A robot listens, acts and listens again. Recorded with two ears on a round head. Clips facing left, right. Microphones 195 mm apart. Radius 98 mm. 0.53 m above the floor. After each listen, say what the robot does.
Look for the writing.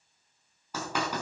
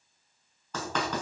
Turn 30° left.
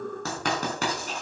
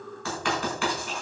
Turn 140° left.
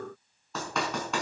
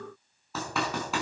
Found it: writing, straight ahead.